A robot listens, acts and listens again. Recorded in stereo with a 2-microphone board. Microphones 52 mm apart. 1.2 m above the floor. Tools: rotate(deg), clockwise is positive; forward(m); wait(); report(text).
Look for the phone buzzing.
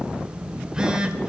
rotate(20)
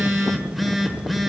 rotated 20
report("Found it: a phone buzzing, straight ahead, 1 to 2 m away.")